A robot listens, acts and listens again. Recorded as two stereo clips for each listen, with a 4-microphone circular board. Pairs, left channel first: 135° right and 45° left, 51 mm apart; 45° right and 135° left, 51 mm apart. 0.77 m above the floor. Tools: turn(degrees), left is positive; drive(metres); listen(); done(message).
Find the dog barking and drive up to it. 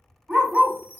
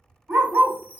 turn(degrees=115)
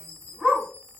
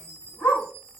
turn(degrees=-40)
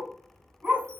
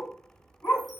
turn(degrees=-15)
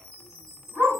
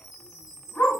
drive(metres=1.0)
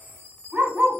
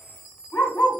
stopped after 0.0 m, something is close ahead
done("Blocked. The dog barking is further on, straight ahead.")